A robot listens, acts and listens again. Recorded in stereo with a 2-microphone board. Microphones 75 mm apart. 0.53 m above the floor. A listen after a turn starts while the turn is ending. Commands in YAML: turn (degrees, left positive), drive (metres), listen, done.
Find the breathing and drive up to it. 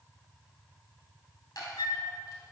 listen: true
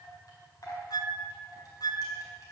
listen: true
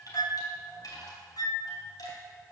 done: "I can't make out breathing to turn to."